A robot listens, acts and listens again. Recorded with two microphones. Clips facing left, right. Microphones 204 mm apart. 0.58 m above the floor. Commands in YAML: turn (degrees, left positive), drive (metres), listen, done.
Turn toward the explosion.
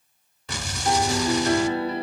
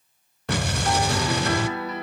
turn: -65
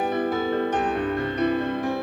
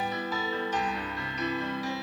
listen: true
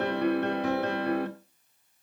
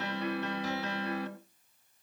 done: "I heard an explosion, but can't make it out now. It was about straight ahead or 50° right."